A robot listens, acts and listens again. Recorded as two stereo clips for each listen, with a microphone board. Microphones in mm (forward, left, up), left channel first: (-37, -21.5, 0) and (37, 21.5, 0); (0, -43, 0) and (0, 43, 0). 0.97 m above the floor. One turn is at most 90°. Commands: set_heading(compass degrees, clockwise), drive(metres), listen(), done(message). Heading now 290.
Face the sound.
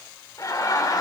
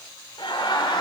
set_heading(20)
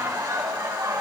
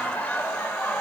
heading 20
set_heading(40)
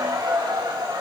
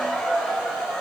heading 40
done("Found it: laughter, straight ahead, over 4 m away.")